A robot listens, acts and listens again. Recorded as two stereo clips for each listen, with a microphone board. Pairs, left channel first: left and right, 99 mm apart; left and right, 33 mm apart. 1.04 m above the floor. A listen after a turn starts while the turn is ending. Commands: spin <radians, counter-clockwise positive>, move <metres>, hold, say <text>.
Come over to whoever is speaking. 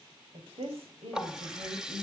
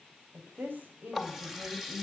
spin -1.31
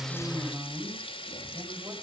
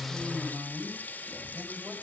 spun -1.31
spin -0.61
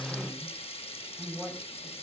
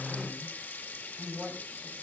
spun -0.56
move 1.0
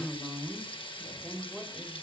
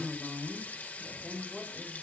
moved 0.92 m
move 1.0
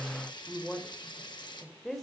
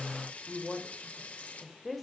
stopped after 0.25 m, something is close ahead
say Blocked. The woman speaking is further on, straight ahead.